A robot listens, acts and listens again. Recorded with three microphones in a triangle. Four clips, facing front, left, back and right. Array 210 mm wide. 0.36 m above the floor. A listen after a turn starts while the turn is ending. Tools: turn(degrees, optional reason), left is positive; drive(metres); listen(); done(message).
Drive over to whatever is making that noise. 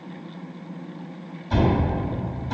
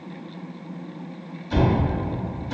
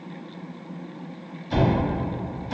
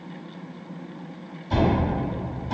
turn(degrees=-55, reason="The cupboard door: 55° right.")
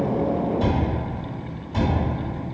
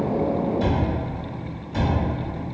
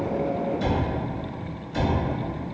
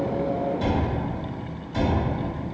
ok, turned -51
drive(metres=1.0)
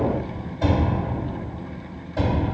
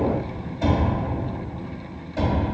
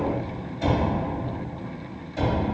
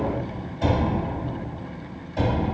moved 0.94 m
turn(degrees=-10, reason="The cupboard door is now 10° right.")
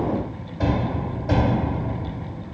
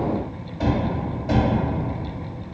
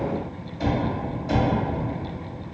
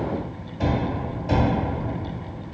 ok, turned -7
drive(metres=1.0)
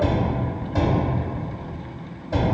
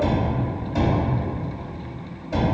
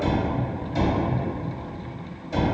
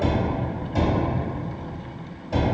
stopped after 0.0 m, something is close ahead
done("Arrived at the cupboard door, straight ahead.")